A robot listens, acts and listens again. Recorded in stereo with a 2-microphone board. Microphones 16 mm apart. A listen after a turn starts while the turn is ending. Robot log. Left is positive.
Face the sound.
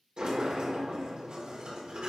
note: The sliding door: about 70° right or 110° right.
cmd yaw -70
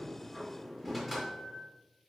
note: So it is at 10° right.
cmd yaw -10
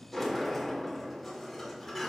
end: Facing the sliding door.